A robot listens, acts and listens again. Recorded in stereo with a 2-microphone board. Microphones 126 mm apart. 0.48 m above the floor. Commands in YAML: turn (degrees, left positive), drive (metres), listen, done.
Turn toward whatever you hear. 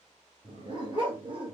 turn: -40
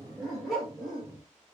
done: "Found it: a dog barking, straight ahead."